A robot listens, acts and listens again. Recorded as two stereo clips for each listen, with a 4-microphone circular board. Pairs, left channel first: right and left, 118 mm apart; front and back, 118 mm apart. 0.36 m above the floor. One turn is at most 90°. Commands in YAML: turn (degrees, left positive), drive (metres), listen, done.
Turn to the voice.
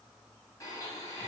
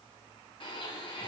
listen: true
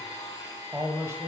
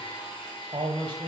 turn: 90
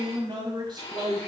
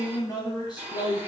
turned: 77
turn: 40
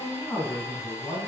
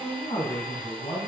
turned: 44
turn: -20
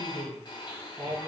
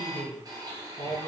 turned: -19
done: "Found it: a man speaking, straight ahead, 2 to 4 m away."